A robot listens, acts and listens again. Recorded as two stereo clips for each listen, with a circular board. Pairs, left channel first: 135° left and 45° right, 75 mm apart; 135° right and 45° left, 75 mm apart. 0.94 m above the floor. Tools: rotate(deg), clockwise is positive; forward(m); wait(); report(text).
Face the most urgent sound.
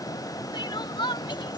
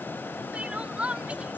rotate(-120)
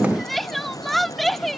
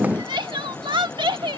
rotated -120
rotate(-45)
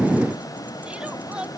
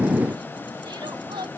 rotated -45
rotate(-30)
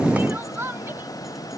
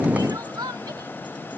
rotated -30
rotate(-15)
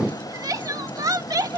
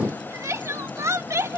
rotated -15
report("Found it: crying, straight ahead.")